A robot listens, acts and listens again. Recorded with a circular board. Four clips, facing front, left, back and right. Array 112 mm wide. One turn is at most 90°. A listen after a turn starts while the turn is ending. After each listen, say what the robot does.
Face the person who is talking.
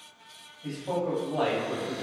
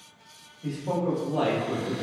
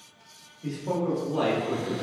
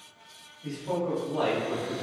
Turn 90° left.
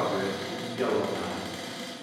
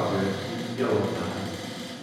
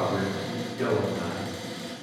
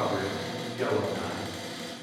Turn 60° left.
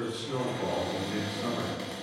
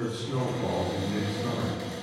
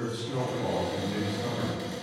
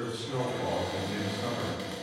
Facing the man speaking, 1 to 2 m away.